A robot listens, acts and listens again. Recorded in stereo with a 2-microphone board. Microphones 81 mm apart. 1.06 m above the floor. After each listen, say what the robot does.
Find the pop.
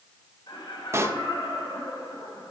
Turn 35° right.
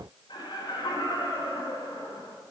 Keep listening.
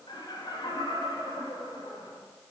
I heard a pop, but can't make it out now. It was about straight ahead or 110° right.